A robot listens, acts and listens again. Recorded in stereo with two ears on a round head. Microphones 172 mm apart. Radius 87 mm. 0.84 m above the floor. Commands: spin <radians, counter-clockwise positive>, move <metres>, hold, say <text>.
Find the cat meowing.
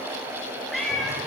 spin 0.52
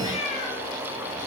spin 2.53
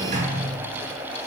hold
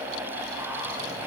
hold
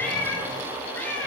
spin 0.17
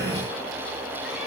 hold
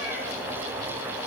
hold
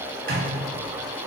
say I heard a cat meowing from this way, but can't make it out now.